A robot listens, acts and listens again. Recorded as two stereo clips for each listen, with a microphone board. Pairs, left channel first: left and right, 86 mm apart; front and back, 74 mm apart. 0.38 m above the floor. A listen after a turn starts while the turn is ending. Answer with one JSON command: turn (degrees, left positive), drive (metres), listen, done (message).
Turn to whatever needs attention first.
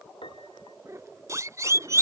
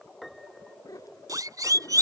{"turn": -145}
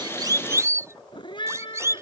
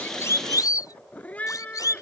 {"turn": -35}
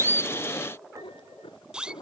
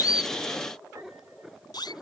{"turn": -10}
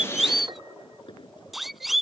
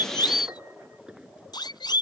{"done": "Found it: a siren, straight ahead."}